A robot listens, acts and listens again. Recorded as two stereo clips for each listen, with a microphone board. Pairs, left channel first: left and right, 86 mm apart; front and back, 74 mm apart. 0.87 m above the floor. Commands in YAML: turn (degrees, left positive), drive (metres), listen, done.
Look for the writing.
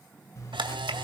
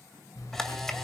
turn: 35
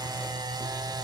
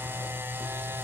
listen: true
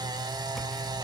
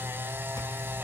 listen: true
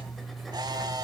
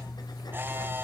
done: "Facing the writing."